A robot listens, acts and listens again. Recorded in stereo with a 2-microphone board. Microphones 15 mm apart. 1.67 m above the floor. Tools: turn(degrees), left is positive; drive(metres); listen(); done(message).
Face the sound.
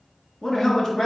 turn(degrees=30)
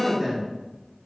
done("Facing the man speaking, 2 to 4 m away.")